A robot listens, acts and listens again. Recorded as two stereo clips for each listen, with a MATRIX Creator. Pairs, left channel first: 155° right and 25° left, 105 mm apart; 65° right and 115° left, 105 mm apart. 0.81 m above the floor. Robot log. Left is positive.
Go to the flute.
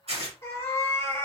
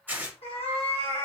cmd idle
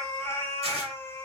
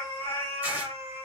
cmd idle
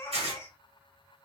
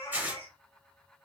end: I can't make out a flute, only a cat meowing and tearing paper.